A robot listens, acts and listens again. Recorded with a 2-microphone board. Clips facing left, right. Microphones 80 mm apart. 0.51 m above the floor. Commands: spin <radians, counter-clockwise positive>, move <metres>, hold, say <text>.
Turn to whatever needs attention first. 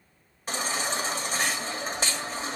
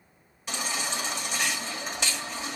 spin 0.70
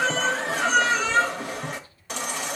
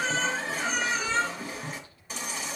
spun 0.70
spin 1.75
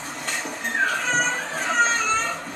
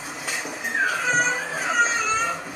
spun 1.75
say Facing the baby crying.